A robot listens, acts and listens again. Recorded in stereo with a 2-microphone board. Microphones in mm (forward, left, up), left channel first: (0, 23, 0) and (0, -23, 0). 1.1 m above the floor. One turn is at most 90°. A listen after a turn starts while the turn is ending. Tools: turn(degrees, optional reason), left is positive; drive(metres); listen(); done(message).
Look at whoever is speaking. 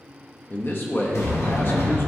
turn(degrees=45, reason="The man speaking: about 45° left or 135° left.")
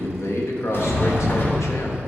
turn(degrees=85, reason="So it is at 85° left.")
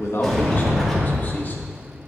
listen()
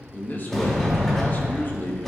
turn(degrees=45, reason="The man speaking is now 45° left.")
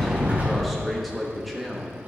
done("Found it: a man speaking, straight ahead.")